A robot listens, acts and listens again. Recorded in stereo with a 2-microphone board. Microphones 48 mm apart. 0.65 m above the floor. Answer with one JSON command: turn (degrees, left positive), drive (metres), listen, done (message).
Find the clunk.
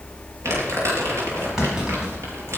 {"turn": -30}
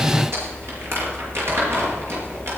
{"listen": true}
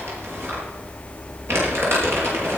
{"done": "I heard a clunk, but can't make it out now. It was about 15° left or 135° right."}